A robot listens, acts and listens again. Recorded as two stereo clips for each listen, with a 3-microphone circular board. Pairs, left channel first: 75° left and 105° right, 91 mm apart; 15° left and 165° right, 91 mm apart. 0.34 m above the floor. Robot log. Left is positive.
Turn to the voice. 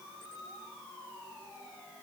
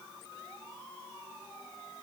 cmd idle
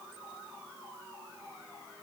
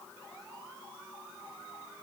cmd idle
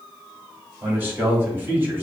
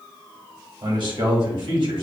note: The man speaking: 170° right.
cmd yaw -170
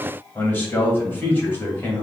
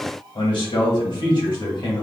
note: The man speaking is now 10° left.
cmd yaw +10
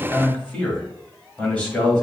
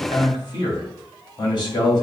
end: Facing the man speaking, 1 to 2 m away.